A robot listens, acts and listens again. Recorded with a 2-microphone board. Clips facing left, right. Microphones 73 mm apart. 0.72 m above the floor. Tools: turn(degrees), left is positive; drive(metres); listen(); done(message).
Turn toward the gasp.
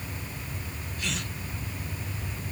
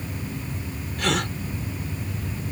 turn(degrees=-70)
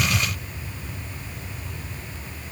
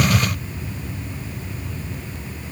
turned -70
listen()
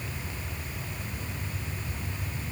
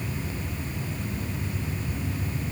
done("I heard a gasp, but can't make it out now. It was about straight ahead or 40° right.")